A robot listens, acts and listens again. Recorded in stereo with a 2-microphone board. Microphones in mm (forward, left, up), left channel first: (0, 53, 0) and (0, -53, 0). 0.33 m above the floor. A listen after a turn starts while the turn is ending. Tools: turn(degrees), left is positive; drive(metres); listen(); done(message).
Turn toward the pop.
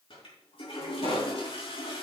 turn(degrees=65)
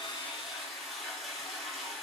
listen()
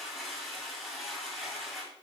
done("I heard a pop, but can't make it out now. It was about straight ahead or 50° left.")